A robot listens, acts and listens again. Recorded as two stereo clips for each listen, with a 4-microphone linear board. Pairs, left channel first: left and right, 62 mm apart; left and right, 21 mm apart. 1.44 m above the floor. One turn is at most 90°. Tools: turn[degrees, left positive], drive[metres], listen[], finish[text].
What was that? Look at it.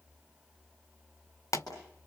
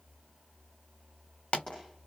Thought: The pop: about 70° left or 110° left.
Action: turn[70]
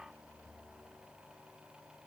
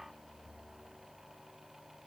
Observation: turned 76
Action: listen[]
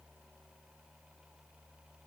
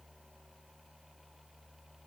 Action: finish[I heard a pop, but can't make it out now. It was about 10° right or 35° left.]